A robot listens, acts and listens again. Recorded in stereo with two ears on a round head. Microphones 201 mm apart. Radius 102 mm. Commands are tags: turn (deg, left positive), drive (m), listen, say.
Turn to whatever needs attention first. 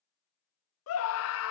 <turn deg="70"/>
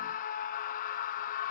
<turn deg="35"/>
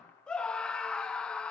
<say>Found it: a scream, straight ahead.</say>